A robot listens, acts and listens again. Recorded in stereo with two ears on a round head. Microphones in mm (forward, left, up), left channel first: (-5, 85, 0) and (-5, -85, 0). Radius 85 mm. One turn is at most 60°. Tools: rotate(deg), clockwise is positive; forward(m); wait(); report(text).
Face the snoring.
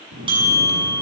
rotate(60)
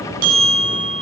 rotate(55)
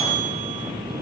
report("Found it: snoring, straight ahead.")